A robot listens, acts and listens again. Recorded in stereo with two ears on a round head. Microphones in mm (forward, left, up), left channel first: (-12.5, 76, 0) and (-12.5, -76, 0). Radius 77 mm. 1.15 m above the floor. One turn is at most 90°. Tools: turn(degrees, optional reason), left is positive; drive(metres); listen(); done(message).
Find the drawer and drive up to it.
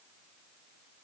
listen()
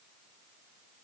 listen()
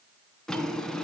turn(degrees=30)
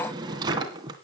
turn(degrees=-25, reason="So it is at 25° right.")
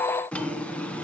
drive(metres=1.0)
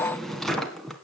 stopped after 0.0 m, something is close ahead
done("Blocked. The drawer is further on, straight ahead.")